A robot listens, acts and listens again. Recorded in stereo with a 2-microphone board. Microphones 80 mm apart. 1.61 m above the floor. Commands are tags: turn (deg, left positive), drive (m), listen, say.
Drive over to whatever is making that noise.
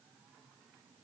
<listen/>
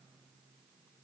<listen/>
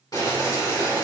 <turn deg="50"/>
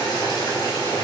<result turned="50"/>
<turn deg="70"/>
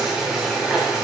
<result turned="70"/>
<turn deg="-10"/>
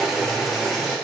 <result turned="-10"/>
<drive m="1.0"/>
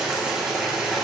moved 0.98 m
<turn deg="-10"/>
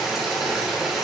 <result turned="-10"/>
<drive m="1.0"/>
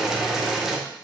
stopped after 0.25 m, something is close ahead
<say>I am next to the boiling.</say>